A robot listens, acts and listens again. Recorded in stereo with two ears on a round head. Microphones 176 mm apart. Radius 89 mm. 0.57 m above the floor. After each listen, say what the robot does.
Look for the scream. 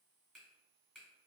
Keep listening.
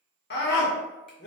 Turn 55° left.
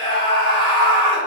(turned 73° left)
Turn 35° left.
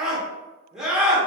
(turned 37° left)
Facing the scream.